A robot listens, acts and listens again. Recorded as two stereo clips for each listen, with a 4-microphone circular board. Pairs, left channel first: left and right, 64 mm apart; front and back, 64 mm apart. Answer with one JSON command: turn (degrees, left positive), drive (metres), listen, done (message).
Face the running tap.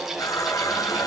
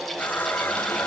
{"turn": 65}
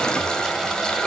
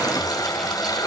{"turn": 10}
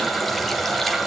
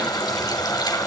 {"done": "Found it: a running tap, straight ahead, 2 to 4 m away."}